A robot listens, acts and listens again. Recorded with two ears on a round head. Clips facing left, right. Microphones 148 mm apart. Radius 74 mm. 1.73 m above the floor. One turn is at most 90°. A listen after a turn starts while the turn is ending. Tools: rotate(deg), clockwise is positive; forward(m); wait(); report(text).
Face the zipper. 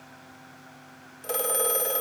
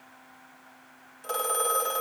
wait()
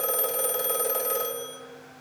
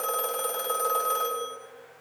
wait()
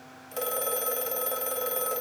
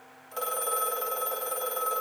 report("I can't make out a zipper, only a phone ringing.")